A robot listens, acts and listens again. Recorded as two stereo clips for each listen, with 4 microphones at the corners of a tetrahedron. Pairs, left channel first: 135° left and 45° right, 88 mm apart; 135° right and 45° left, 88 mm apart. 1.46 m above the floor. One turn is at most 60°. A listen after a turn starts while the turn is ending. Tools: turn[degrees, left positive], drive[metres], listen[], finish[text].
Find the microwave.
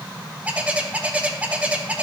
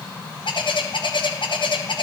Action: listen[]
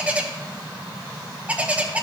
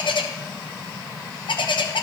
Action: listen[]
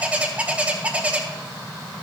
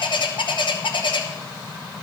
Action: finish[I can't make out a microwave to turn to.]